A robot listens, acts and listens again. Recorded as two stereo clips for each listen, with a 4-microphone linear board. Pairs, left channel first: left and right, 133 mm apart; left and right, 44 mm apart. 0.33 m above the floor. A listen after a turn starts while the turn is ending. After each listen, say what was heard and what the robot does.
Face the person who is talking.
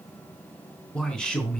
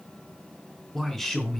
Turn 30° left.
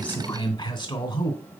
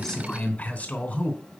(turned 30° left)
So it is at 145° left. Turn 145° left.
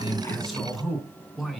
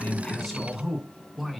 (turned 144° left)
Facing the man speaking.